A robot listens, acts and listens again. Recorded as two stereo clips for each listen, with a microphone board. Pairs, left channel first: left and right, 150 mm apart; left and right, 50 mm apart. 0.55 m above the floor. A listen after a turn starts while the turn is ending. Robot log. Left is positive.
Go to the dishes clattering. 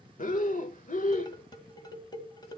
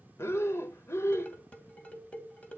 note: The dishes clattering: about 25° left or 155° left.
cmd yaw +25
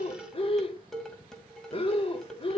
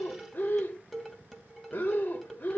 cmd fwd 1.0
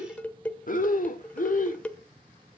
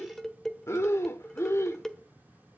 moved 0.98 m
note: The dishes clattering is now 10° left.
cmd yaw +10
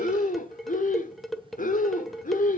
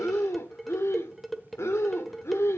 cmd fwd 1.0
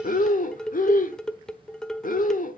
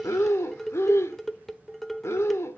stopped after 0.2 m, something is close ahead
end: Arrived at the dishes clattering, straight ahead.